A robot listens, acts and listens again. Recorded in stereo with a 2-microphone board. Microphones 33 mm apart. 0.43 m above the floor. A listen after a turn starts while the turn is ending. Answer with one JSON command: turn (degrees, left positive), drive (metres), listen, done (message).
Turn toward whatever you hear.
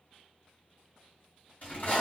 {"turn": 45}
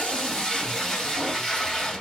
{"turn": 10}
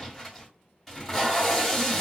{"done": "Facing the tape being pulled, 1 to 2 m away."}